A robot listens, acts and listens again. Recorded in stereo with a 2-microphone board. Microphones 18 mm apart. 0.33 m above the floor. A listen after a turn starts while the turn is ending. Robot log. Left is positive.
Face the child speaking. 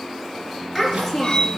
cmd yaw +30
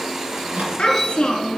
note: So it is at 140° left.
cmd yaw +140
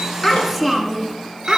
end: Facing the child speaking.